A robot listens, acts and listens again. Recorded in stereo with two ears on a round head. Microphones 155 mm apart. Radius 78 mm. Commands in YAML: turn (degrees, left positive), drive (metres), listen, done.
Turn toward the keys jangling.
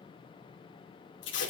listen: true
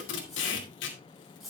turn: 30
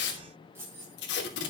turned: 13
turn: -30
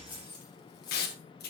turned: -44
turn: 25
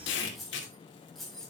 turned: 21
done: "Facing the keys jangling."